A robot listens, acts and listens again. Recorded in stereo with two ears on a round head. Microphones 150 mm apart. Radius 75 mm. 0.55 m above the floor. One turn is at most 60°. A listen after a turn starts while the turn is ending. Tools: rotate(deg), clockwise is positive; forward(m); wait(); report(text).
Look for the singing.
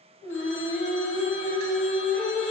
rotate(-30)
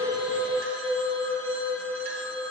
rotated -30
rotate(-30)
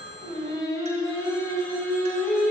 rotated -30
rotate(-30)
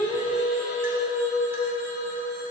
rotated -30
rotate(-60)
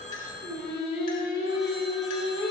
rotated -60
rotate(-55)
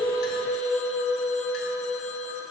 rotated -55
rotate(-15)
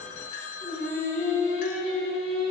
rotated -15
report("Found it: singing, straight ahead, 1 to 2 m away.")